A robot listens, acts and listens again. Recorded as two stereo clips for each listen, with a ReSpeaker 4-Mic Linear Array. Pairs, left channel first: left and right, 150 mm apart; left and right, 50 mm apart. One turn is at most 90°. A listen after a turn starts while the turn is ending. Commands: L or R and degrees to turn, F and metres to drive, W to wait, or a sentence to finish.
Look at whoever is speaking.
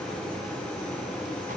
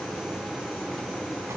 W
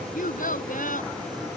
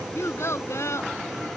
L65
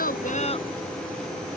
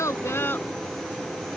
W
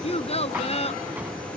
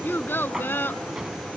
L45
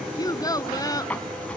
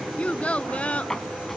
L25
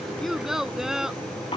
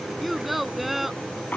Found it: a child speaking, straight ahead.